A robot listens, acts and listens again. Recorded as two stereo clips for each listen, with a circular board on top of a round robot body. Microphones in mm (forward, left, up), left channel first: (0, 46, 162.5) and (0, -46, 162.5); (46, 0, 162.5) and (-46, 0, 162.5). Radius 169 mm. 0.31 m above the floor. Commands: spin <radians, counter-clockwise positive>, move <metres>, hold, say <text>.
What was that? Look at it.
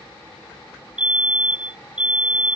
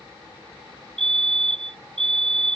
spin -2.88
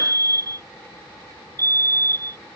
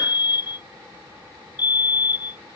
spin -0.70
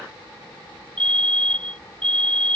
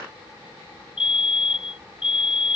spin 0.17
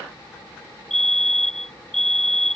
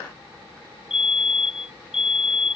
say Found it: a fire alarm, straight ahead.